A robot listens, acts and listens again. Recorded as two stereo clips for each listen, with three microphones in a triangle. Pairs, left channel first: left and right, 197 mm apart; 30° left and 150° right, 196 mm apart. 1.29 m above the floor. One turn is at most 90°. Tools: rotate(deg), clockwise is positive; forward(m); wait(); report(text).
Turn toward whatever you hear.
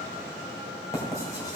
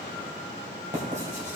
rotate(-90)
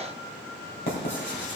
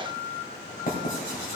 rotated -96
rotate(-70)
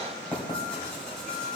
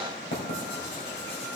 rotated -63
report("Found it: writing, straight ahead, 2 to 4 m away.")